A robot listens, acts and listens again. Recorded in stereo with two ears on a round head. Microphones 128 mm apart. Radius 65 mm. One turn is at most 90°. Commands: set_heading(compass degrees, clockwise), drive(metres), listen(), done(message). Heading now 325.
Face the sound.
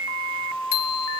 set_heading(235)
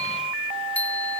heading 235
set_heading(225)
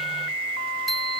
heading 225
done("Facing the bicycle bell.")